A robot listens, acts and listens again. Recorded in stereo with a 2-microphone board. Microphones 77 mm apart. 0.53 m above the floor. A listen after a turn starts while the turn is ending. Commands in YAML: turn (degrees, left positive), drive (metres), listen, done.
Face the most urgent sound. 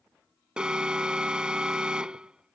turn: -30
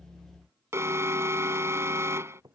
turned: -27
turn: -145
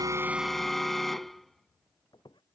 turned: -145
done: "Found it: an alarm, straight ahead."